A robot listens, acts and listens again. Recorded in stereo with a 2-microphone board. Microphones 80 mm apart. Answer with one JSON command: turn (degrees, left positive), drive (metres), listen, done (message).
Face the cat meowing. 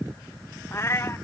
{"turn": 30}
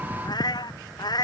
{"turn": 125}
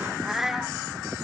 {"done": "Facing the cat meowing."}